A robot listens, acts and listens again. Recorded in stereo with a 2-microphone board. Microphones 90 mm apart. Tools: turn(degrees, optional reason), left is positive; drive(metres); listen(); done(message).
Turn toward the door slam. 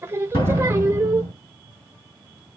turn(degrees=75, reason="The door slam: about 75° left or 105° left.")
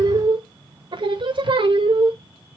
listen()
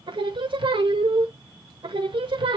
done("I heard a door slam, but can't make it out now. It was about straight ahead or 30° left.")